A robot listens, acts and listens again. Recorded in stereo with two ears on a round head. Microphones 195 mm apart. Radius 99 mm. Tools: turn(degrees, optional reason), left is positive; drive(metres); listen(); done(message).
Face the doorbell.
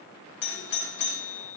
turn(degrees=55, reason="The doorbell: about 55° left or 125° left.")
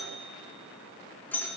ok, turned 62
turn(degrees=10, reason="So it is at 10° left.")
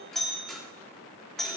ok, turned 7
done("Found it: a doorbell, straight ahead.")